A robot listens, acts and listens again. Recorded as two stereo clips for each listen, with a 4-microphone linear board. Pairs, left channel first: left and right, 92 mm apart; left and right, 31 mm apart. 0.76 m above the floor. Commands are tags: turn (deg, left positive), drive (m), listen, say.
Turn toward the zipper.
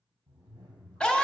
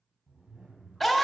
<turn deg="-50"/>
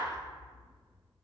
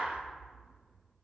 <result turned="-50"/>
<say>Found it: a zipper, straight ahead, 1 to 2 m away.</say>